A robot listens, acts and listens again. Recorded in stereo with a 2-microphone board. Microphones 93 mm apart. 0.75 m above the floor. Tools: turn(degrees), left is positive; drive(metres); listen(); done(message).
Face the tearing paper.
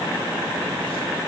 listen()
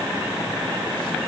listen()
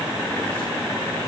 done("I can't make out tearing paper.")